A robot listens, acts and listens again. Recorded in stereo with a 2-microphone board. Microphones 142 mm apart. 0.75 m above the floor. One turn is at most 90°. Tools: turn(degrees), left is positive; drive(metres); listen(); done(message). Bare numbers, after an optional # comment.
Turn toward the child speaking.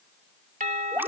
listen()
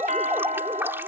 listen()
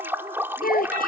turn(90)
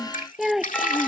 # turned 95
done("Found it: a child speaking, straight ahead.")